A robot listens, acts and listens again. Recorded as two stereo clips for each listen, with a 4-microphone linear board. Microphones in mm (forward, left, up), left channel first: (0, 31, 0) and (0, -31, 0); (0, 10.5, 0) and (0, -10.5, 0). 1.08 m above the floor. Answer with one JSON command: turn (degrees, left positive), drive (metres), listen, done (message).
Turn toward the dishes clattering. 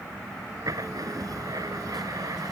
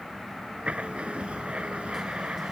{"listen": true}
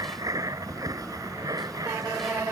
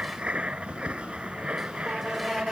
{"listen": true}
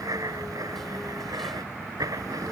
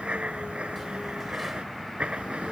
{"done": "I can't make out dishes clattering to turn to."}